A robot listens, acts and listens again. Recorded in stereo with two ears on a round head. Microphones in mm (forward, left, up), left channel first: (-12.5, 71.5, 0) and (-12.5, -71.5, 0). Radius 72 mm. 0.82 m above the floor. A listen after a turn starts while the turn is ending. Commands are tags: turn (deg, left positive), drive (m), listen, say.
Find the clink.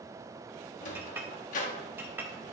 <turn deg="-30"/>
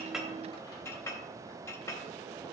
<turn deg="20"/>
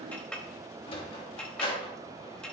<say>Found it: a clink, straight ahead, under 1 m away.</say>